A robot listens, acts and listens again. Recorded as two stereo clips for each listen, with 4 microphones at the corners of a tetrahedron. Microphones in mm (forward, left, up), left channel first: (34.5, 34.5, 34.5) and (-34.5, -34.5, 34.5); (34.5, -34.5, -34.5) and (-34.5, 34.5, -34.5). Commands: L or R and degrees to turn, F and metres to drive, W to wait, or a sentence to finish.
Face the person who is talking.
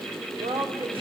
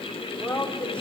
R125
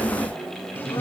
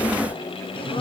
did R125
W
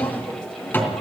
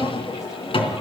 W
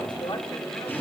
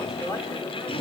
L10
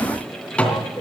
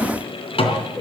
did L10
W
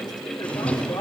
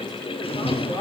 W
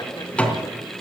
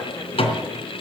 Facing where the woman speaking came from. I can't hear it now.